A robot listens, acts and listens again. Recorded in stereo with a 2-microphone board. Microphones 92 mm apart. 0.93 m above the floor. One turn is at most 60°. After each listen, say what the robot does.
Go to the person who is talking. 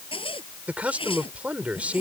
Turn 30° right.
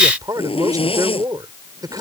Turn 60° right.
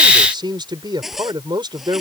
Turn 55° right.
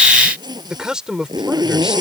Turn 10° right.
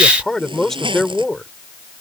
Drive 1.0 m forward.
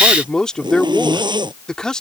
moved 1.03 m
Turn 10° left.
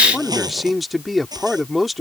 Drive 1.0 m forward.
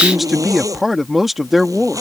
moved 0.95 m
Drive 1.0 m forward.
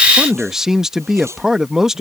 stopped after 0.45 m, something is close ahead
I am next to the man speaking.